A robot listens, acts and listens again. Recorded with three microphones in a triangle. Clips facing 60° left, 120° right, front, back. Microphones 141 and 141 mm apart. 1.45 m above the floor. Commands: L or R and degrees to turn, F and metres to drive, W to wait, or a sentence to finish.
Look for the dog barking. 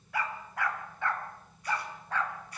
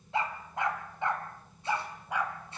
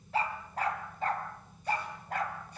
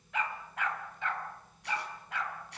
R40
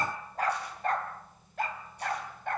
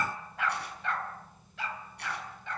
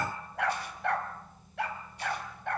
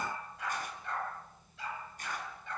L25
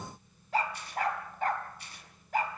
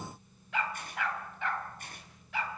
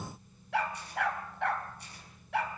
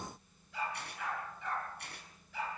L15
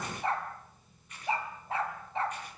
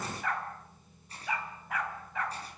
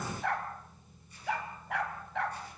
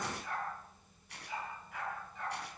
Found it: a dog barking, straight ahead, over 4 m away.